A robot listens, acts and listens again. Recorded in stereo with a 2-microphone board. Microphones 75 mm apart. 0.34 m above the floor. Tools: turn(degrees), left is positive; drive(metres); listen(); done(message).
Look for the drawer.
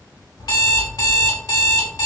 listen()
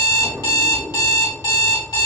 turn(degrees=-50)
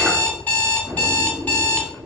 done("Facing the drawer, 1 to 2 m away.")